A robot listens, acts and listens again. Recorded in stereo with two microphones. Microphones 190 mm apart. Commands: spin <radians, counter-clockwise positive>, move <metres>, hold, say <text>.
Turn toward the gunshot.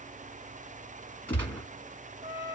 spin 0.52
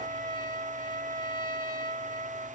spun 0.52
hold
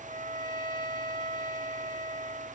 say I heard a gunshot, but can't make it out now. It was about 20° right or 140° left.